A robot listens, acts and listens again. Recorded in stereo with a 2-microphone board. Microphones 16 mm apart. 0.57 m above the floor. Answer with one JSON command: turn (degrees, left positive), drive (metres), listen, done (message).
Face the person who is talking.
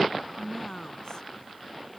{"turn": 45}
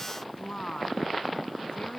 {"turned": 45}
{"turn": 90}
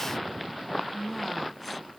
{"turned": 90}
{"done": "Found it: a woman speaking, straight ahead."}